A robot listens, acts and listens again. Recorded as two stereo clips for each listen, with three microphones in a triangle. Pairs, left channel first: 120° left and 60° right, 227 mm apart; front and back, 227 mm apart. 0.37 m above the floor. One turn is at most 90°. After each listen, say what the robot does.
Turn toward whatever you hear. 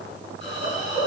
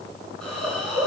Turn 85° left.
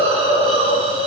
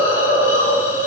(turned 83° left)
Facing the hiss.